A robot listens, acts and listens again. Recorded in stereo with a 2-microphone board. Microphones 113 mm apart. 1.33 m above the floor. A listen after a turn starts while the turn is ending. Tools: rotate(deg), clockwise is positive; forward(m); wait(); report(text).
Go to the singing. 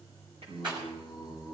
rotate(65)
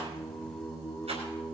forward(1.0)
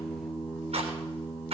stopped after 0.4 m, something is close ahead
report("Blocked. The singing is further on, straight ahead.")